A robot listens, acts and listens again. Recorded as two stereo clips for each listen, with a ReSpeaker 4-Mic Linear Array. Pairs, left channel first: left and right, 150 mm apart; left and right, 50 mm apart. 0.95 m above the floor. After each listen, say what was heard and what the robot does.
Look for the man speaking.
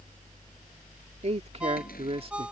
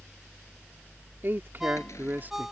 The man speaking: about 40° right or 140° right. Turn 40° right.
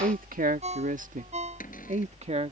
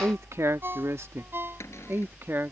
The man speaking: about 45° right or 135° right. Turn 45° right.
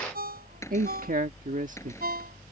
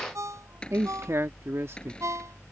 So it is at 120° right. Turn 120° right.
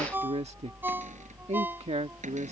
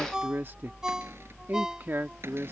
The man speaking is now 45° right. Turn 45° right.
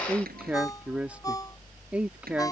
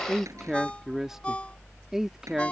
The man speaking is now 10° right. Turn 10° right.
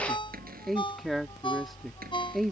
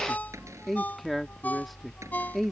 Found it: a man speaking, straight ahead.